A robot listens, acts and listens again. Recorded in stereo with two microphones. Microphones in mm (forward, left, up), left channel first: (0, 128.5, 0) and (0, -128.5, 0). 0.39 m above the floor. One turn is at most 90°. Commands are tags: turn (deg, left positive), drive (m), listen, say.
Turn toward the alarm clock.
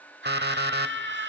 <turn deg="-40"/>
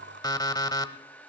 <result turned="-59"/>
<turn deg="15"/>
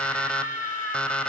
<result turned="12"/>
<say>Facing the alarm clock, under 1 m away.</say>